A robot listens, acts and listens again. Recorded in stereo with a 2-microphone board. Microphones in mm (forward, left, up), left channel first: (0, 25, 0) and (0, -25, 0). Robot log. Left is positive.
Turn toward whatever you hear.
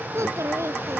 note: The child speaking: about 70° right or 110° right.
cmd yaw -70
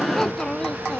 note: So it is at 20° left.
cmd yaw +20
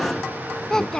note: The child speaking is now 15° left.
cmd yaw +15
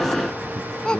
note: The child speaking is now 20° left.
cmd yaw +20
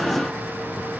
cmd idle
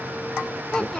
note: The child speaking is now 15° left.
cmd yaw +15
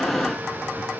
cmd idle
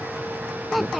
end: Facing the child speaking.